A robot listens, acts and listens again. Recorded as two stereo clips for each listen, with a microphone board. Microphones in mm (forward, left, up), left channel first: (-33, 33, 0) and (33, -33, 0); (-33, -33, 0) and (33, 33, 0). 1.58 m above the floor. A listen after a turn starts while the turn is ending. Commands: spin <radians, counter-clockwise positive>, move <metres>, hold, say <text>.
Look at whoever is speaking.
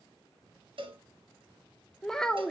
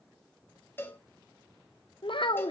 spin -2.44
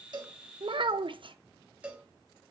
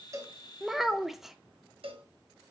spin -0.70
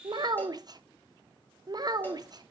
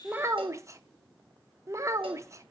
spin -0.17
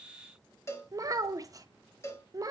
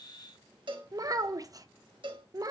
say Found it: a child speaking, straight ahead.